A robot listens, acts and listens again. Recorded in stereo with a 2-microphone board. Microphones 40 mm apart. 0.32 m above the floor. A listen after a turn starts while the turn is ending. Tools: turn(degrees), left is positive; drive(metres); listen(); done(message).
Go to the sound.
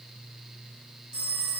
turn(degrees=-30)
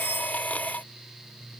listen()
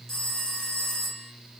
turn(degrees=15)
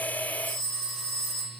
drive(metres=1.0)
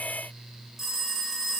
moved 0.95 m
drive(metres=1.0)
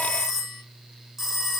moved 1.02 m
drive(metres=1.0)
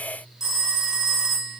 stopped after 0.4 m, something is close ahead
turn(degrees=-10)
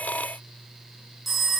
done("Arrived at the phone ringing, straight ahead.")